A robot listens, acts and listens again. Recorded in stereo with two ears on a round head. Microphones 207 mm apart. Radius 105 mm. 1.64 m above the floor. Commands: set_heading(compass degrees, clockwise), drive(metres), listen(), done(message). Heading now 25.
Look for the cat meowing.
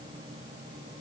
listen()
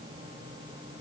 listen()
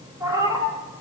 set_heading(45)
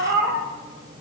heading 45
set_heading(175)
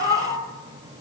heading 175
set_heading(140)
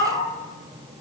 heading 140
set_heading(100)
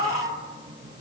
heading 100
set_heading(125)
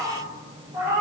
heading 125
set_heading(140)
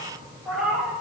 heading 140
done("Found it: a cat meowing, straight ahead, 2 to 4 m away.")